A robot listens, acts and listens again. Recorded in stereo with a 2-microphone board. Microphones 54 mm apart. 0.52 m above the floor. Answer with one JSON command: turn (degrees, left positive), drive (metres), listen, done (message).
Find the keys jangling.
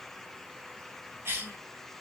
{"listen": true}
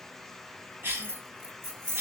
{"turn": -50}
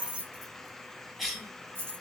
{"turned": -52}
{"turn": -45}
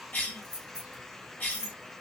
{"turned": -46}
{"turn": -15}
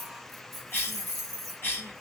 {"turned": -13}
{"done": "Found it: keys jangling, straight ahead, 1 to 2 m away."}